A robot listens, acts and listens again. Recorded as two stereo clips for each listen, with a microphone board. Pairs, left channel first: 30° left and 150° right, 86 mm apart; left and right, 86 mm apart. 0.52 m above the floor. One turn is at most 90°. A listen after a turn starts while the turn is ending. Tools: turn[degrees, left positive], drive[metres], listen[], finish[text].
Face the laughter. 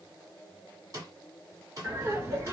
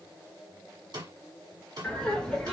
Thought: The laughter: 170° left.
Action: turn[90]
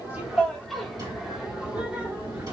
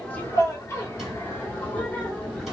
Thought: The laughter is now 160° left.
Action: turn[90]
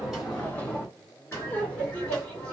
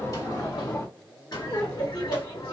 Thought: The laughter is now 100° left.
Action: turn[90]
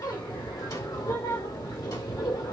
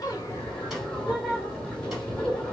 Thought: The laughter is now 10° left.
Action: turn[10]
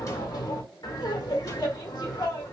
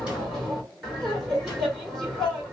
Action: finish[Facing the laughter, 1 to 2 m away.]